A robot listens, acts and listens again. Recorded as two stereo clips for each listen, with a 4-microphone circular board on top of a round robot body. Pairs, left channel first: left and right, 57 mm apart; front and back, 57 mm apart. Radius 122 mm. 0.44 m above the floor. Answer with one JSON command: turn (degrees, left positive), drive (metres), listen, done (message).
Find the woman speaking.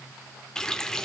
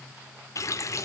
{"listen": true}
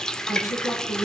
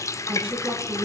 {"turn": 115}
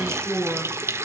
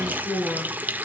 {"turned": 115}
{"turn": -15}
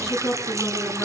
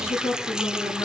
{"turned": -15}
{"turn": 15}
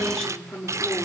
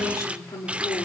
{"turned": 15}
{"turn": 10}
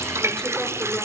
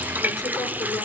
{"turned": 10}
{"listen": true}
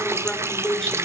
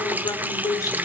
{"done": "Facing the woman speaking, over 4 m away."}